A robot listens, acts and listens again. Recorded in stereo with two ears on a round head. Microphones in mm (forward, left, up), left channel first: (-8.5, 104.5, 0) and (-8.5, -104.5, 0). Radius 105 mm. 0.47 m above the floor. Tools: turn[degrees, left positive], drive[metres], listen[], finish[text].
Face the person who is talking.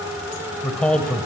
Action: turn[30]
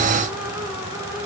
Action: listen[]
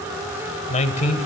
Thought: So it is at 145° left.
Action: turn[145]
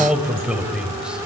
Action: finish[Found it: a man speaking, straight ahead.]